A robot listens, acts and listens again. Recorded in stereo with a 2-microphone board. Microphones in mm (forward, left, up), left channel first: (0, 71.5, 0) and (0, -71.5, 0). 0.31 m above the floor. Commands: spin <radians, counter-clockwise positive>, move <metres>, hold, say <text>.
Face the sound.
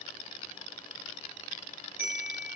spin 1.57
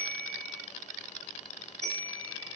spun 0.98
spin 0.52
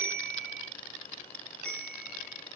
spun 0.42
say Facing the bell.